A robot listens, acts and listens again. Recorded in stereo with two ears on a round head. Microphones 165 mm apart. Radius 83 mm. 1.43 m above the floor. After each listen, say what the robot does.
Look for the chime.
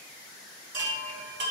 Turn 70° right.
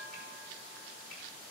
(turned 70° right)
Keep listening.
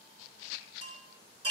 Turn 35° right.
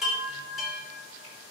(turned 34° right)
Found it: a chime, straight ahead, 2 to 4 m away.